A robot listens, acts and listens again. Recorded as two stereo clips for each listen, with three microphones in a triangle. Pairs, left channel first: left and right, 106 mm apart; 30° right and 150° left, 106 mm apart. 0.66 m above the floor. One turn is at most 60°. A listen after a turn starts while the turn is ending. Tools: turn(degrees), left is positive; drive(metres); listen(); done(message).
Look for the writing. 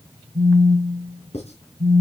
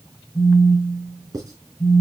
turn(degrees=60)
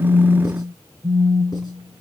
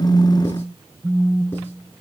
turn(degrees=30)
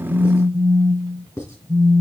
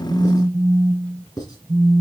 turn(degrees=20)
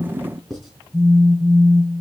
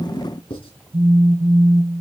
done("Found it: writing, straight ahead.")